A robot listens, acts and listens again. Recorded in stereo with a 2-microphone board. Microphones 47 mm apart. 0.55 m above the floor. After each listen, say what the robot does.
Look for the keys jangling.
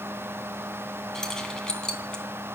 Turn 15° left.
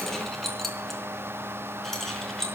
Turn 30° left.
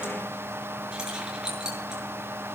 Turn 15° right.
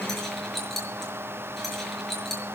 Found it: keys jangling, straight ahead, over 4 m away.